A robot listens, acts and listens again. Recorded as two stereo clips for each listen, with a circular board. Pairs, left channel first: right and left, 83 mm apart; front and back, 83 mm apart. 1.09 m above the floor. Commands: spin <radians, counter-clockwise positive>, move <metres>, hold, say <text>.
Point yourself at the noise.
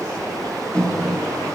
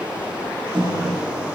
spin -2.88
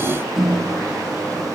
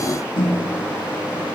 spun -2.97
say Facing the microwave.